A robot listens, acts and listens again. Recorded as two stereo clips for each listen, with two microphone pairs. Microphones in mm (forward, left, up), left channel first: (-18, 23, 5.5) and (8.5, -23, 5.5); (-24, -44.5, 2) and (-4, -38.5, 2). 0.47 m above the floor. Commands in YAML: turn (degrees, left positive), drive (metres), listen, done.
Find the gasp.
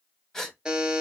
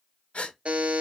turn: -160
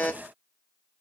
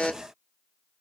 done: "I heard a gasp from this way, but can't make it out now."